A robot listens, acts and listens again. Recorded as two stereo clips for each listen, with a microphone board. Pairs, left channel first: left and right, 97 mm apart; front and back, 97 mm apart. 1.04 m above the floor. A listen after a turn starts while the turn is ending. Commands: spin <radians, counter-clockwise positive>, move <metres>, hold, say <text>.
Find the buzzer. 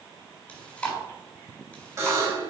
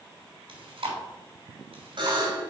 spin -2.62
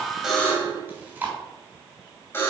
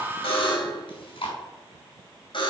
spin 0.44
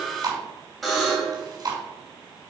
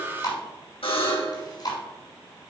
say Facing the buzzer.